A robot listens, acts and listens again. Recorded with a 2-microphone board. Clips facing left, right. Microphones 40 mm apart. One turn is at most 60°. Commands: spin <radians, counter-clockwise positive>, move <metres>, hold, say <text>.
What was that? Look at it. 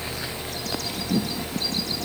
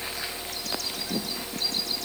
hold
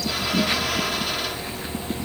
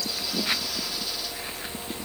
hold
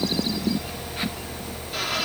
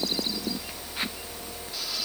say I can't make out anything to turn to.